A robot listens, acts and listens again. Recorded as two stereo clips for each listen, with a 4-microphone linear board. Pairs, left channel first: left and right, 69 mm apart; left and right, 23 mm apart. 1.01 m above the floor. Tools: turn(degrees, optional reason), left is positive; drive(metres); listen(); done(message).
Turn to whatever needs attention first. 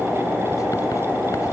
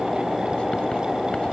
listen()
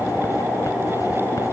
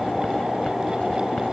listen()
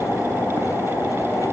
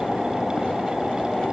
done("I can't make out anything urgent to turn to.")